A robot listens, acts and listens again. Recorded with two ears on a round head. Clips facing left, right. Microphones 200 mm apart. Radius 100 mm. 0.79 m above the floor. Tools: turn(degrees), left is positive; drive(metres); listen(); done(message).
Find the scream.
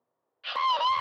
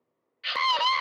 turn(degrees=-30)
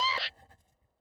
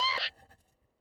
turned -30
done("Facing the scream.")